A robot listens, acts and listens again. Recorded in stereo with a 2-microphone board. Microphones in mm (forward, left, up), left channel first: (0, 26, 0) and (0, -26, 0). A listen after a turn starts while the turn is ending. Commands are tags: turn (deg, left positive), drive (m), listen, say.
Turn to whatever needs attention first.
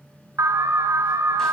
<turn deg="-90"/>
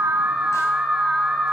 <say>Found it: an alarm, straight ahead, 1 to 2 m away.</say>